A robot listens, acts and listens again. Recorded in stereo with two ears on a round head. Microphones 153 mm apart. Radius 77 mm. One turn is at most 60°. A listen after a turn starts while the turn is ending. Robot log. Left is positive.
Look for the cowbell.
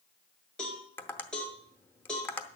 cmd yaw +30
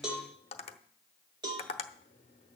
note: So it is at 25° right.
cmd yaw -25
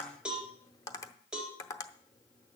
end: Facing the cowbell.